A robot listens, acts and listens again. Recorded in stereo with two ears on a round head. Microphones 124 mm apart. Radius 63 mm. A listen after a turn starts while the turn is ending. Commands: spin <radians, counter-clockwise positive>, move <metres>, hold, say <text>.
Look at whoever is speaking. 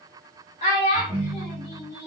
spin 0.87
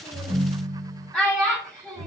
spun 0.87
say Facing the child speaking, 1 to 2 m away.